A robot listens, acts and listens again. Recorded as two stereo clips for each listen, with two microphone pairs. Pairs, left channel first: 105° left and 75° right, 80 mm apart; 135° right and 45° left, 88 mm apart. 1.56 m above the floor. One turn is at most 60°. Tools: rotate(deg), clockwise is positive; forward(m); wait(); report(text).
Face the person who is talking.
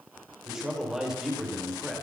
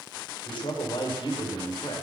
rotate(60)
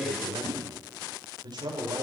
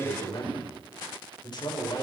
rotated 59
rotate(60)
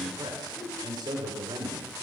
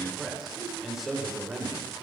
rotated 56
rotate(45)
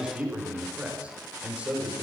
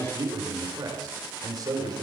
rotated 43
report("Facing the man speaking, over 4 m away.")